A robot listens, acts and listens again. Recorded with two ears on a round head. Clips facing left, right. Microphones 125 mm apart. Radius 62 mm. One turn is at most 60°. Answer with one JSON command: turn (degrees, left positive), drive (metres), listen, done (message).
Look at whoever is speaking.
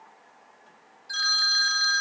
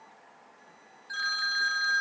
{"listen": true}
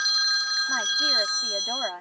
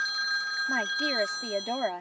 {"turn": -20}
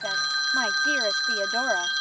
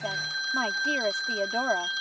{"listen": true}
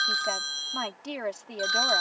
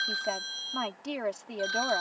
{"done": "Facing the woman speaking."}